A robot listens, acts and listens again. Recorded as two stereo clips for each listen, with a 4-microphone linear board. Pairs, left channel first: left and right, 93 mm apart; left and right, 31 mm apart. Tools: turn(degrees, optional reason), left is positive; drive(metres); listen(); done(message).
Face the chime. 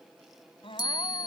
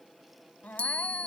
turn(degrees=50, reason="The chime: about 50° left or 130° left.")
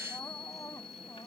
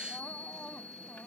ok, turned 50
turn(degrees=80, reason="So it is at 80° left.")
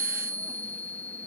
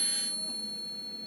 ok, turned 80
turn(degrees=15, reason="The chime is now 15° left.")
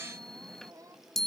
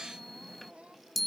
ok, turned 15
done("Facing the chime.")